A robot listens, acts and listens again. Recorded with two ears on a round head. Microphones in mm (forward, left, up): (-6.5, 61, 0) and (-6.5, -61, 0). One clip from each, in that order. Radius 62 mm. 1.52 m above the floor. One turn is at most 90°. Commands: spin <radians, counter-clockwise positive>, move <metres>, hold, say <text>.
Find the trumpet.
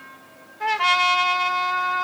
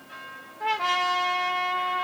spin 0.96
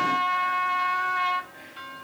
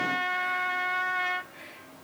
spin 0.26
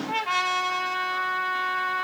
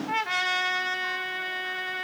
say Facing the trumpet.